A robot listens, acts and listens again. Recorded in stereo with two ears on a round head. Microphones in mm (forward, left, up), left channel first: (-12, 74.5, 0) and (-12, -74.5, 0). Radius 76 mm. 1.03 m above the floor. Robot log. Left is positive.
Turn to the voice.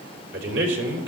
cmd yaw -90
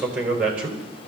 end: Found it: a man speaking, straight ahead, over 4 m away.